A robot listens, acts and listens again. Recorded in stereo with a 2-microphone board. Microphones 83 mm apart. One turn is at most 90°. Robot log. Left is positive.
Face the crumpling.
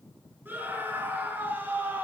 cmd idle
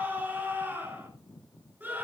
cmd idle
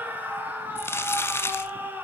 note: The crumpling: about 30° left or 150° left.
cmd yaw +30
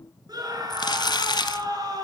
note: So it is at 120° left.
cmd yaw +90
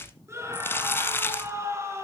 note: The crumpling is now 30° left.
cmd yaw +30
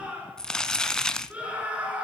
note: The crumpling is now 10° left.
cmd yaw +10
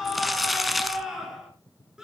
end: Facing the crumpling, 1 to 2 m away.